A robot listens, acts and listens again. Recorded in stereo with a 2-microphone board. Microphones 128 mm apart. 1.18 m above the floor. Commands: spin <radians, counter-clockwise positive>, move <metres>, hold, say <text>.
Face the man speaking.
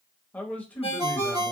spin 0.52
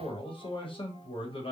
spin 2.44
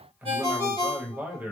spin -0.26
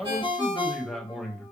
say Found it: a man speaking, straight ahead.